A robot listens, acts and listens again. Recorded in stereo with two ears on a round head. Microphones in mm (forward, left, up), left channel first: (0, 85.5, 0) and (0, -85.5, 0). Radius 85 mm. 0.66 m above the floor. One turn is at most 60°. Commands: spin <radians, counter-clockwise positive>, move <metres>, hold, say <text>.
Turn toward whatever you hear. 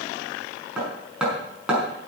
spin -0.52
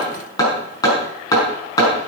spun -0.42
spin 0.35
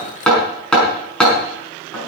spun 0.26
say Facing the hammering.